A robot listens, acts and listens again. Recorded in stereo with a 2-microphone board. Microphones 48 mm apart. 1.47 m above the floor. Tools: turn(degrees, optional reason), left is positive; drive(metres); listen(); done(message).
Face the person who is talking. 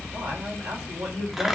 turn(degrees=-75, reason="The man speaking: about 75° right or 105° right.")
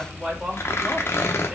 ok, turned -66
turn(degrees=-10, reason="So it is at 10° right.")
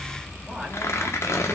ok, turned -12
listen()
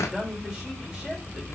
done("Facing the man speaking, over 4 m away.")